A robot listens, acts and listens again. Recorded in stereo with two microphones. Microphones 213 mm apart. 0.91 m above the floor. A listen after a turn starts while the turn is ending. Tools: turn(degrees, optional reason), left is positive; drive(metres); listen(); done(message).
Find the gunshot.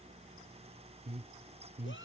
listen()
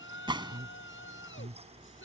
turn(degrees=-20, reason="The gunshot: about 20° right or 160° right.")
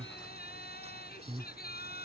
listen()
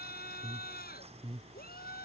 done("I heard a gunshot, but can't make it out now. It was about straight ahead or 140° right.")